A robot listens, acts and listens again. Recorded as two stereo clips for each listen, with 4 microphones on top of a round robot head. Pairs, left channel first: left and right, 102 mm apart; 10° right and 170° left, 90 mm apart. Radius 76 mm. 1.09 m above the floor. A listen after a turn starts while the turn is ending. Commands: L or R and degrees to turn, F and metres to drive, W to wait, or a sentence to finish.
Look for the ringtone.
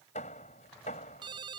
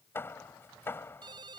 R135
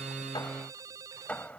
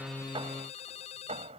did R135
R25
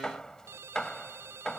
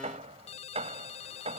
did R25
R20
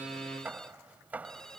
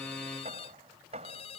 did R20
Found it: a ringtone, straight ahead.